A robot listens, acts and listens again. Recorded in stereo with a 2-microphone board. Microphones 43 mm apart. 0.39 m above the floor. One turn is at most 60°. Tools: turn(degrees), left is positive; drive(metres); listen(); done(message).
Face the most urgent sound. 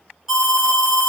turn(degrees=-30)
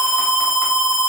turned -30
turn(degrees=-60)
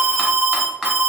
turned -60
turn(degrees=-60)
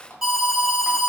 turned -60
turn(degrees=-20)
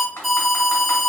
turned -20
done("Found it: an alarm, straight ahead.")